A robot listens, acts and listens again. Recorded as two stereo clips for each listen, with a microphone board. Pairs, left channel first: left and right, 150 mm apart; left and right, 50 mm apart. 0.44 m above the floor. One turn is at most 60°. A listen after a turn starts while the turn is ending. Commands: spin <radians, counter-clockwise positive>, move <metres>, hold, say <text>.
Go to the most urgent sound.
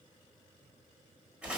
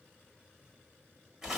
hold
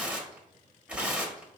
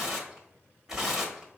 hold
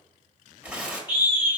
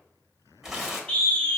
spin 0.52
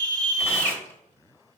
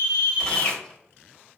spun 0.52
spin 1.05
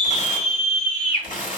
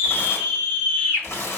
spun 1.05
spin 0.87
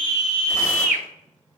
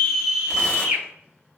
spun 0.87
spin -0.35
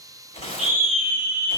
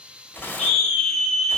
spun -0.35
move 1.0
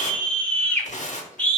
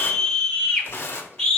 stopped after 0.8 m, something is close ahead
spin 0.26
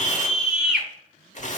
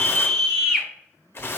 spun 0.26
say I am next to the scream.